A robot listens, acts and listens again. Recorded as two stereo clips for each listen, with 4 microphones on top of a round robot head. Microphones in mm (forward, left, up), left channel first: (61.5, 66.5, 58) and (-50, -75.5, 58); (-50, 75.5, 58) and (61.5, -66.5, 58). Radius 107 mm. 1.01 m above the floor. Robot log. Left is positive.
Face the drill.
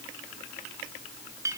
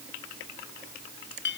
cmd idle
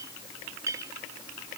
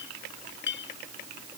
cmd idle
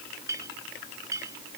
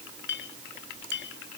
end: I can't make out a drill, only a clink.